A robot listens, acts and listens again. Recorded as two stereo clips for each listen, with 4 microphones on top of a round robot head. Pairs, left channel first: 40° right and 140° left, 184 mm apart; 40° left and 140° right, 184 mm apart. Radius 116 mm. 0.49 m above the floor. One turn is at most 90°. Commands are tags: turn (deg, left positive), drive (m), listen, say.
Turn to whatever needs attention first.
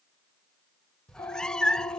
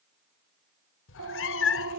<turn deg="-90"/>
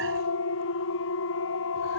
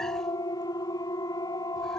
<turn deg="-30"/>
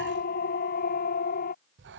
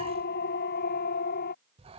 <say>Facing the siren.</say>